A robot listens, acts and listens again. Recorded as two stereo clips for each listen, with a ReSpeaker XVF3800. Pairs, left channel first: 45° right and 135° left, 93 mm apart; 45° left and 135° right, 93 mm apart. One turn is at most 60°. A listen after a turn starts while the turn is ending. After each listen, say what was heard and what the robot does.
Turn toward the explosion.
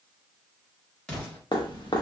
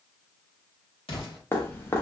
The explosion: 35° left. Turn 35° left.
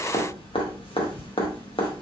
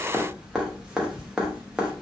Facing where the explosion came from. I can't hear it now.